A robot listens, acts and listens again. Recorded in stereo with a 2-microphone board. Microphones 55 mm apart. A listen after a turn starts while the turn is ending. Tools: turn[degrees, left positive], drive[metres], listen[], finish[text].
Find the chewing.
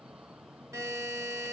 Action: listen[]
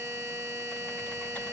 Action: listen[]
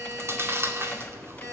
Thought: The chewing: about 50° right or 130° right.
Action: turn[-50]
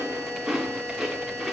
Thought: So it is at 10° right.
Action: turn[-10]
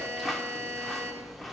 Action: finish[Facing the chewing.]